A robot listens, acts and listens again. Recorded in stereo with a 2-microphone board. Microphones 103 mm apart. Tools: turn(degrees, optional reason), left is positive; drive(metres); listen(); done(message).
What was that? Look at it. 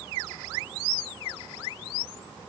listen()
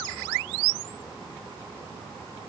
listen()
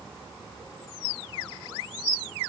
done("I can't make out anything.")